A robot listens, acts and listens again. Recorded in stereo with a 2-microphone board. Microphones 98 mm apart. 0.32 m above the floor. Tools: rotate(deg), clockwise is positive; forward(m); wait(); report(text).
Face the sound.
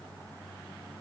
wait()
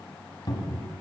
rotate(-50)
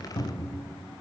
rotate(-80)
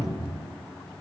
rotate(10)
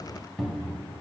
report("Facing the cupboard door, 1 to 2 m away.")